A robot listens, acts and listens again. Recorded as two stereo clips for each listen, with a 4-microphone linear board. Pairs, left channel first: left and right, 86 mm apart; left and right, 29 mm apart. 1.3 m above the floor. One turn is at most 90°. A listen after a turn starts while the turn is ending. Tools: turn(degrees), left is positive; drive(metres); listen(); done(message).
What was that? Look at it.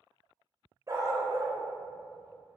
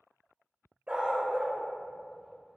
turn(degrees=-40)
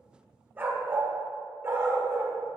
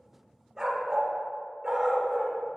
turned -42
turn(degrees=-30)
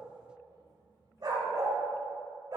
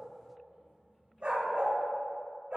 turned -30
turn(degrees=-50)
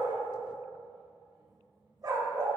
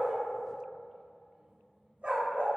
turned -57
turn(degrees=-45)
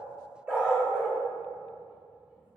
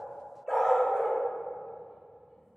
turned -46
turn(degrees=-10)
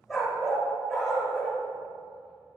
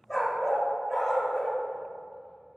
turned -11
done("Found it: a dog barking, straight ahead.")